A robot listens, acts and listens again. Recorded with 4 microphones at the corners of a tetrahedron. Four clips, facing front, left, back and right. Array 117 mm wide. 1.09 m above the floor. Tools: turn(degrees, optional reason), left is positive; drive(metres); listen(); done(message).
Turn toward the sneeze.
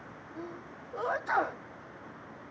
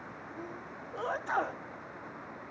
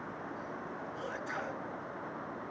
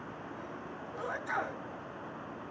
turn(degrees=30, reason="The sneeze: 30° left.")
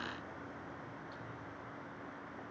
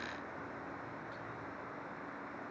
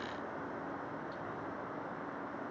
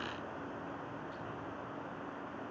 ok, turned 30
done("Facing where the sneeze came from. I can't hear it now.")